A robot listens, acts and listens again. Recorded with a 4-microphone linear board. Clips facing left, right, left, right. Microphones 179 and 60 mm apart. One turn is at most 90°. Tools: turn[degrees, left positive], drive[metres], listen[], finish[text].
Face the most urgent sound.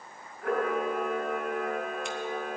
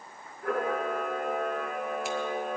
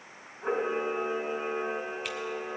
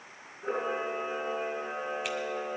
Action: listen[]
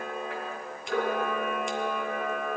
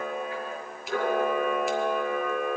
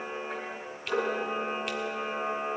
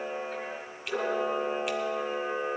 Action: listen[]
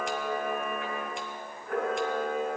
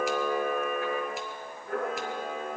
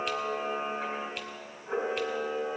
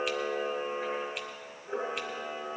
Action: finish[I can't make out anything urgent, only a camera shutter.]